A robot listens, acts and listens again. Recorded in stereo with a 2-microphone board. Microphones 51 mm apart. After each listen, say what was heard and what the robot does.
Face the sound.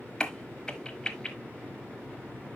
Turn 30° left.
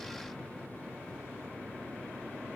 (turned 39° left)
Keep listening.
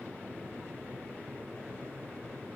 I heard a crack, but can't make it out now. It was about 25° right or 130° left.